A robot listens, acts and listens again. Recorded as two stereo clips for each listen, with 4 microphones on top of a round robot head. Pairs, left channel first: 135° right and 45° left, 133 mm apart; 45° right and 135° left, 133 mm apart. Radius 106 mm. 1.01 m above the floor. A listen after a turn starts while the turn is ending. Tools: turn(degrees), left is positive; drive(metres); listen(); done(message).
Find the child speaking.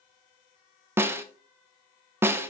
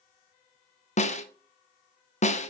listen()
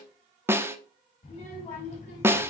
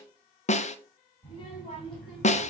turn(degrees=-95)
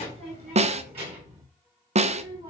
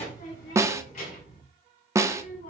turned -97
turn(degrees=-10)
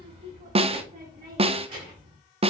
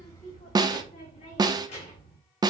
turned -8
done("Facing the child speaking, over 4 m away.")